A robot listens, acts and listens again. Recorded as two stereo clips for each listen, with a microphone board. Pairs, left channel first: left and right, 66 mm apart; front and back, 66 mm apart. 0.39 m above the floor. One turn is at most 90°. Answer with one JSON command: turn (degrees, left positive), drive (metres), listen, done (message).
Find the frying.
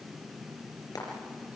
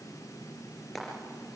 {"turn": 90}
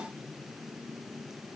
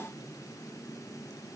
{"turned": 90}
{"listen": true}
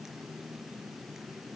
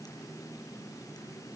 {"listen": true}
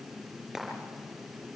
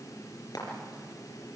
{"done": "Facing the frying."}